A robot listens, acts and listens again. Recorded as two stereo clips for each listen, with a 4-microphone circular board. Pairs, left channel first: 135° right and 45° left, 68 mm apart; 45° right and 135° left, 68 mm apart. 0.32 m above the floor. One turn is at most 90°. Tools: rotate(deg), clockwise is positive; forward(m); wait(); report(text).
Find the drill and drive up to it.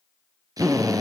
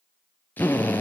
rotate(-20)
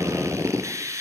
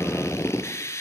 forward(1.0)
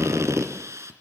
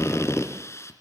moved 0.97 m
forward(1.0)
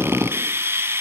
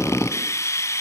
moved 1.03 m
forward(1.0)
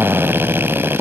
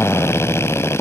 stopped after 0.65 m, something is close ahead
report("Arrived at the drill, straight ahead.")